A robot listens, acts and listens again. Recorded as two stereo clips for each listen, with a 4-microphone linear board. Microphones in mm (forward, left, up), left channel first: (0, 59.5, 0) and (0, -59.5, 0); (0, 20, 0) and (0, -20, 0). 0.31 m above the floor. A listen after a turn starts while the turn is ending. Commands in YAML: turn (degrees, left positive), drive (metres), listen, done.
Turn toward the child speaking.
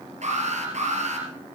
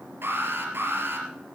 listen: true
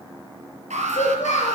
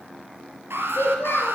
turn: 90
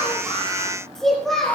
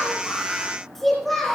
done: "Facing the child speaking."